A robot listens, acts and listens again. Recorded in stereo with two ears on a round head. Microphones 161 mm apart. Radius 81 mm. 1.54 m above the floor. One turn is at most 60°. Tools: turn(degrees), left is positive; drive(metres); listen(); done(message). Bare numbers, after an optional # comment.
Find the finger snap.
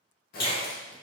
# The finger snap: about 65° left or 115° left.
turn(60)
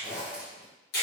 # So it is at 55° left.
turn(55)
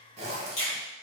# The finger snap is now 25° left.
turn(25)
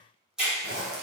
done("Found it: a finger snap, straight ahead, 1 to 2 m away.")